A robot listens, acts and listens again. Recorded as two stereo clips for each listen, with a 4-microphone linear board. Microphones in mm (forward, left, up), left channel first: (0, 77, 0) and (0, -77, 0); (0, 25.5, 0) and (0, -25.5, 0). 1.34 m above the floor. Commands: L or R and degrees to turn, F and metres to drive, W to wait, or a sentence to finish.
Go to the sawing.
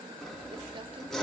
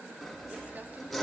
L30
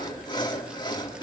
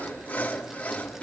L150
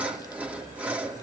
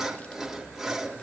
R10
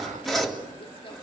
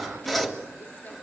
F1.0
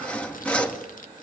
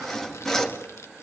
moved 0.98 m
L10
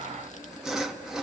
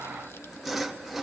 F1.0
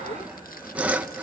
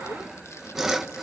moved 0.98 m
R10
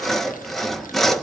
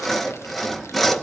F1.0
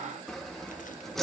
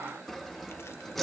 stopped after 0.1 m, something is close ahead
I am next to the sawing.